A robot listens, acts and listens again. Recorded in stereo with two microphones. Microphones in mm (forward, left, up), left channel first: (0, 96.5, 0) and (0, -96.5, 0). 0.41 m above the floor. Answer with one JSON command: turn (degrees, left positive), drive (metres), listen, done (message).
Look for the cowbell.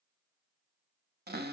{"listen": true}
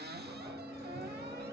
{"listen": true}
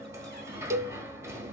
{"turn": -30}
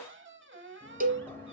{"turn": -135}
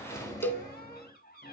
{"turn": 10}
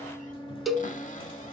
{"done": "Found it: a cowbell, straight ahead."}